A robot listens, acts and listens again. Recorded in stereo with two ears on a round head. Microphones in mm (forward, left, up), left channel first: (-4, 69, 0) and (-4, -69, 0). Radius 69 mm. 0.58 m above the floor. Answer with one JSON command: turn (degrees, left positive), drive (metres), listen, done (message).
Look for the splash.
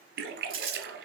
{"turn": -70}
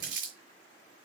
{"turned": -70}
{"listen": true}
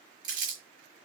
{"done": "I heard a splash, but can't make it out now. It was about straight ahead or 40° right."}